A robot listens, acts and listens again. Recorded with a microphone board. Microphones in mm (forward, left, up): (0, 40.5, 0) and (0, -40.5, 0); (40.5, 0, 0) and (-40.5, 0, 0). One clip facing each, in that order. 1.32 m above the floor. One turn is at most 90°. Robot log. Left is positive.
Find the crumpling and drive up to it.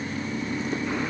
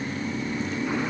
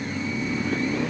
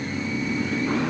cmd idle
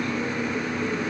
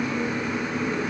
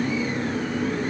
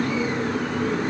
cmd idle
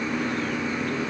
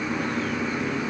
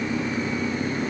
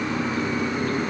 end: I can't make out crumpling.